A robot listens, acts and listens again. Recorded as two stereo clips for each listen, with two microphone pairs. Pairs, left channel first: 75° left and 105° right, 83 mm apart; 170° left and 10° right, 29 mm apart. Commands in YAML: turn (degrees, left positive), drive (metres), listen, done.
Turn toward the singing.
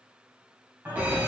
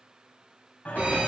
turn: -170
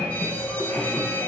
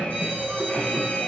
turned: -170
turn: 20
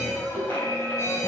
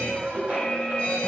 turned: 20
done: "Facing the singing, 2 to 4 m away."